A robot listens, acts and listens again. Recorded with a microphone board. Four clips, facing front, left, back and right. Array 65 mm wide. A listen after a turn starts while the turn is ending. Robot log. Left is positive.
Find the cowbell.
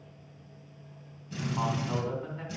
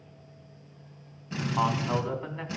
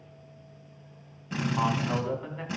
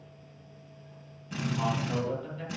cmd idle
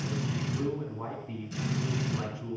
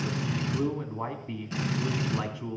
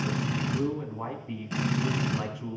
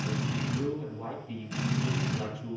cmd idle
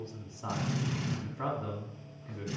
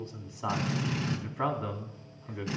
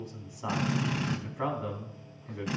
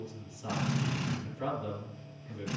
end: I can't make out a cowbell, only a drill and a man speaking.